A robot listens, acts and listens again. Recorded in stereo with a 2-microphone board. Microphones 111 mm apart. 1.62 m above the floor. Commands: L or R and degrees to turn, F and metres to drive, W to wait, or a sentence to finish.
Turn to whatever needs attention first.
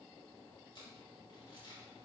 W
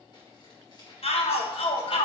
L70
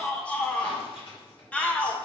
L15
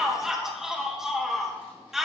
Found it: a shout, straight ahead, 1 to 2 m away.